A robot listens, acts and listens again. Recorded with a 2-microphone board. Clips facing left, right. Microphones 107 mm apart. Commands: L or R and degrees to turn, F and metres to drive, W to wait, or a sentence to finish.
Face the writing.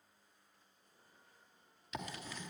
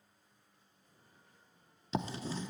R30
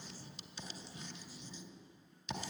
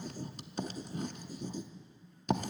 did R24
R120
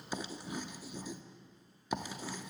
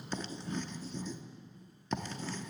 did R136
L15
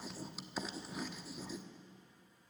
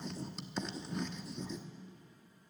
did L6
Found it: writing, straight ahead.